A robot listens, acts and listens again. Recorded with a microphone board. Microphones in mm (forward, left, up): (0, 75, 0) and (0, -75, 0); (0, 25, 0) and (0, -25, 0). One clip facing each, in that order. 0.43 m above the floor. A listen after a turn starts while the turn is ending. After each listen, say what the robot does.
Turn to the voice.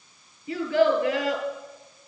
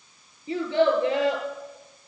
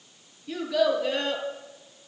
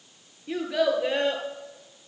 Turn 25° right.
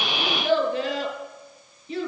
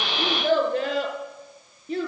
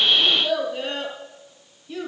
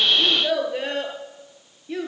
Turn 130° right.
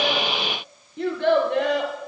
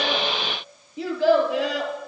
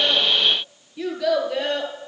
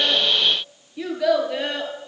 Found it: a child speaking, straight ahead.